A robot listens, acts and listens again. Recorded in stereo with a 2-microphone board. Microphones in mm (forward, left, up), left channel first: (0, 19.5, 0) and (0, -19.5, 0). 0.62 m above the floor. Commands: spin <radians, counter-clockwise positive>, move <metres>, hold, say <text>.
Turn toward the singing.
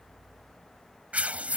hold
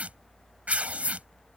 hold
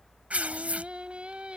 spin -0.52
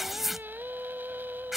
spin -2.09
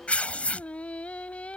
spin 0.61
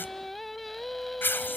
say Found it: singing, straight ahead.